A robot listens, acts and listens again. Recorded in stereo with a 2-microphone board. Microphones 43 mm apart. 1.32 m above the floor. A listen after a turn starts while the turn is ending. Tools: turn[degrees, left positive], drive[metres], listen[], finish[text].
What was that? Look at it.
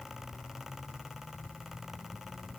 Action: listen[]
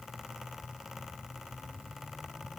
Action: listen[]
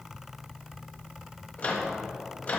Thought: The microwave: about 35° left or 145° left.
Action: turn[35]
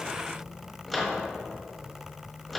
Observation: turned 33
Action: finish[Found it: a microwave, straight ahead.]